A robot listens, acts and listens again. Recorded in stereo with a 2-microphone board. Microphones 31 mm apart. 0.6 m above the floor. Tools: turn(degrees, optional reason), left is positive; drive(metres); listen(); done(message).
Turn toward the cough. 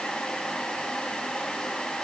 listen()
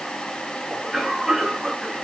turn(degrees=-30)
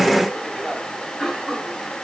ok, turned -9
turn(degrees=30)
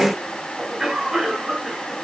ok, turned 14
turn(degrees=-15, reason="So it is at 15° right.")
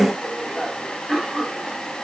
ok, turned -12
done("Found it: a cough, straight ahead.")